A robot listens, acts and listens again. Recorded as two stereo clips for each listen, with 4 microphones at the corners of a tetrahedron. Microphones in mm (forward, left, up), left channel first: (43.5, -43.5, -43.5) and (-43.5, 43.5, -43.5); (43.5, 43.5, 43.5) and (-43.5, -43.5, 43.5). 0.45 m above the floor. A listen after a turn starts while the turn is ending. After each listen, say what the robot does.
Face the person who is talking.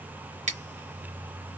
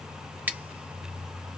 Keep listening.
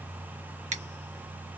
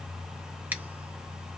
Keep listening.
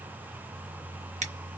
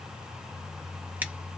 I can't make out anyone speaking to turn to.